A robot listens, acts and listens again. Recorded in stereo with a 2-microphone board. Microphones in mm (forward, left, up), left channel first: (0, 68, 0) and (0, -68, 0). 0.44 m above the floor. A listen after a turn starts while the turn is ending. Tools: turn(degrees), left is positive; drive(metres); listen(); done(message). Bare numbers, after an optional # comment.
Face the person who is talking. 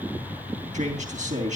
# The man speaking: about 60° right or 120° right.
turn(-60)
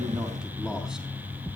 listen()
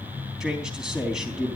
done("Found it: a man speaking, straight ahead, 2 to 4 m away.")